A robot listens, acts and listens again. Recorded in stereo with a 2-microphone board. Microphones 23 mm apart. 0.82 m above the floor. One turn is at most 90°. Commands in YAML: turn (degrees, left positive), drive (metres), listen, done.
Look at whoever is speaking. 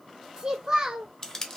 turn: -25
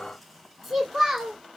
done: "Found it: a child speaking, straight ahead."